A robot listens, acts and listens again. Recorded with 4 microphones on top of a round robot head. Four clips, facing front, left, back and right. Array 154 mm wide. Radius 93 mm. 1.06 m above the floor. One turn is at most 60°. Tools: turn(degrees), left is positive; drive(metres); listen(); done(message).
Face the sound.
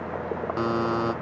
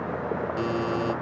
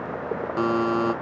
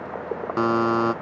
turn(degrees=-60)
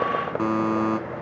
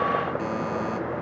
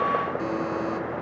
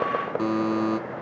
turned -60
turn(degrees=-25)
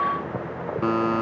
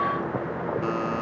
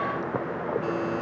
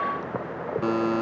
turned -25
turn(degrees=-20)
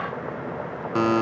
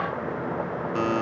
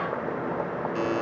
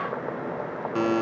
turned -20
done("Facing the buzzer.")